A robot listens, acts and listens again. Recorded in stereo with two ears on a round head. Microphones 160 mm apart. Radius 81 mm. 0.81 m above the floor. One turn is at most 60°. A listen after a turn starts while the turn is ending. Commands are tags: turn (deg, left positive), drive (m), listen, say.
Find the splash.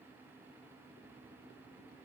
<listen/>
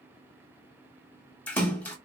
<turn deg="30"/>
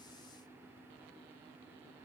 <listen/>
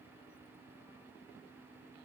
<say>I heard a splash, but can't make it out now. It was about 20° right or 140° left.</say>